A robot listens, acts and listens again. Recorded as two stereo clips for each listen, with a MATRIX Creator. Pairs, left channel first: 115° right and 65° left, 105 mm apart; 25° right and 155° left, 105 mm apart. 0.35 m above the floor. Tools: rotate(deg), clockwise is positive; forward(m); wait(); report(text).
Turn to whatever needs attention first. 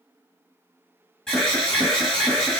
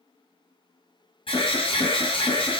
rotate(30)
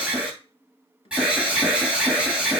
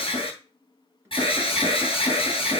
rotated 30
rotate(10)
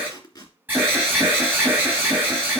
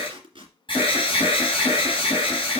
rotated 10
report("Facing the alarm.")